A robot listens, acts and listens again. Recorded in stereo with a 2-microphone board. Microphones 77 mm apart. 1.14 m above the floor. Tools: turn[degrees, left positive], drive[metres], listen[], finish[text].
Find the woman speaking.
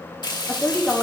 Thought: The woman speaking: about 15° left or 165° left.
Action: turn[15]
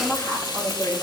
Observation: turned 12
Thought: The woman speaking: about 30° left or 150° left.
Action: turn[30]
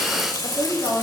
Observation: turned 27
Thought: So it is at 125° left.
Action: turn[125]
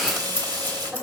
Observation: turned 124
Action: listen[]
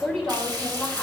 Action: finish[Facing the woman speaking.]